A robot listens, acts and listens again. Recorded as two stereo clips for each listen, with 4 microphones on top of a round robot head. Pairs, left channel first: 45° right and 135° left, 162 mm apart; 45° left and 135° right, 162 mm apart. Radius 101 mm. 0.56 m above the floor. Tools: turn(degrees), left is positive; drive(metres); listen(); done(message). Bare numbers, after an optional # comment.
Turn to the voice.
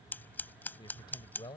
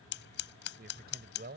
# The man speaking: 110° right.
turn(-110)
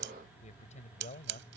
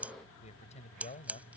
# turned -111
done("Found it: a man speaking, straight ahead.")